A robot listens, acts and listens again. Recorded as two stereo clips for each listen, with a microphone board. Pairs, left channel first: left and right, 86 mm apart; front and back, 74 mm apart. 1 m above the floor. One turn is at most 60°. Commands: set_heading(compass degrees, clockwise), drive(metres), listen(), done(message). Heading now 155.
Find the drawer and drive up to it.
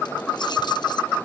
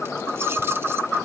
listen()
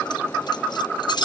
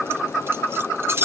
listen()
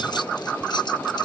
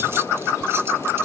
done("I can't make out a drawer to turn to.")